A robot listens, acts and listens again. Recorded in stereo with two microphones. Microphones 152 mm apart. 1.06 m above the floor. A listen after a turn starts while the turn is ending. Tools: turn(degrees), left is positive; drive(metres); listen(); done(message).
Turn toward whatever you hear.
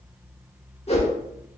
turn(degrees=45)
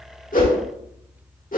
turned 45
turn(degrees=85)
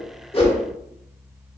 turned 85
listen()
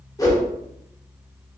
turn(degrees=25)
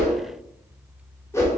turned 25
turn(degrees=20)
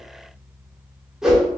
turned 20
done("Found it: a whoosh, straight ahead.")